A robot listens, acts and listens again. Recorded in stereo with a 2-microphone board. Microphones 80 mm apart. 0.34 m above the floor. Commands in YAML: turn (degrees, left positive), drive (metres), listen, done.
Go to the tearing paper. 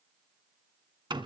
listen: true
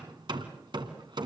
listen: true
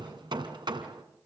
done: "I can't make out tearing paper, only hammering."